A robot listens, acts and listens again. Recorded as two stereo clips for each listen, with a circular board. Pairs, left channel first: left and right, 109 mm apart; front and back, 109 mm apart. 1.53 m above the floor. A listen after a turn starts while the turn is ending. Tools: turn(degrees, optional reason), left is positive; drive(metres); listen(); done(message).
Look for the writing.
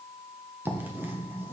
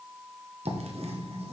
turn(degrees=-160, reason="The writing: 160° right.")
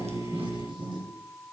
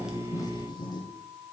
turn(degrees=-45, reason="The writing is now 45° right.")
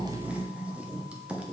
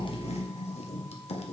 turn(degrees=-10, reason="The writing is now 10° right.")
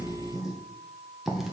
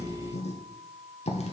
done("Found it: writing, straight ahead.")